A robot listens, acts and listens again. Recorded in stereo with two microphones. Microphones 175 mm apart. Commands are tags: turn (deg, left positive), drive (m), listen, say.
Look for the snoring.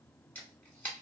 <listen/>
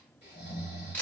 <turn deg="90"/>
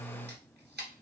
<listen/>
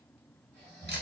<turn deg="10"/>
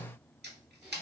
<listen/>
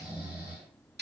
<say>Facing the snoring, 1 to 2 m away.</say>